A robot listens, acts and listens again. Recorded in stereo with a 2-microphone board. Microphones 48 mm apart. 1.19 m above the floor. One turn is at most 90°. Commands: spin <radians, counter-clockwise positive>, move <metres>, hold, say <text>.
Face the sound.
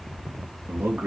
spin -0.87
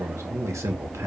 spin -1.40
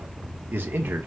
spin -0.87
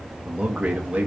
spin -0.44
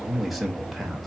say Facing the man speaking, 1 to 2 m away.